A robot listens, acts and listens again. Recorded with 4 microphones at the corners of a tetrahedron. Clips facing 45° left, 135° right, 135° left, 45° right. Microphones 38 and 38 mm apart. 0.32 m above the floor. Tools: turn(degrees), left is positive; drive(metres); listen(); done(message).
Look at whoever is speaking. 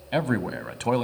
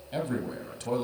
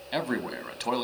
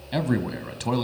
turn(degrees=55)
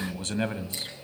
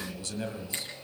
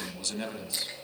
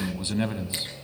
turn(degrees=15)
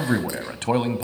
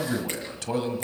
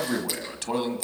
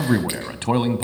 done("Found it: a man speaking, straight ahead, 1 to 2 m away.")